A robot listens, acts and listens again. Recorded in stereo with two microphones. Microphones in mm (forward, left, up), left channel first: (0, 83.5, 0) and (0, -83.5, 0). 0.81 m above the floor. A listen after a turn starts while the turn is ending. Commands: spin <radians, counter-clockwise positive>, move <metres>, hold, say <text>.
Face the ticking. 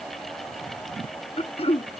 hold
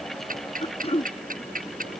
spin -0.96
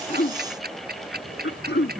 spin -1.22
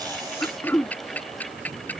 spin 0.17
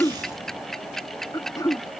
say Facing the ticking.